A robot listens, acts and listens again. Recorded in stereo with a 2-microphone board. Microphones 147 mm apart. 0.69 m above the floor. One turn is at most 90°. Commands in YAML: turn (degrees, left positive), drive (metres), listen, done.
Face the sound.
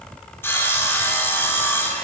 turn: 30
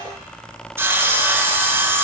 turn: -15
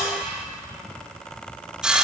done: "Facing the sawing, 1 to 2 m away."